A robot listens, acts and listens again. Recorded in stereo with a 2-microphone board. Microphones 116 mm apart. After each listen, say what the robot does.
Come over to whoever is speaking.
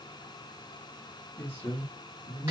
Turn 30° left.
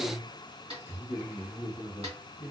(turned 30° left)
Turn 20° right.
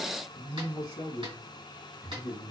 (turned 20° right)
Turn 10° right.
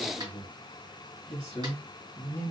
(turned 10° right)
Drive 1.0 m forward.
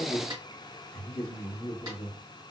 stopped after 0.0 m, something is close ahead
Something is in my way. I am facing the man speaking but have not reached it.